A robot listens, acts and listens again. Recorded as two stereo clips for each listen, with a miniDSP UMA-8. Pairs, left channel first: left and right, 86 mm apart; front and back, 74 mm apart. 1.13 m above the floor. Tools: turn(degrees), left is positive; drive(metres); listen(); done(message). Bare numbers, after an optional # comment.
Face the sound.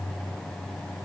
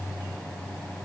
listen()
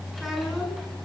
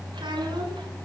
# The child speaking: straight behind.
turn(180)
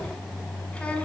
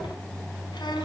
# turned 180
# The child speaking is now 15° left.
turn(15)
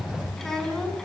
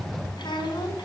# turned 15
done("Found it: a child speaking, straight ahead, over 4 m away.")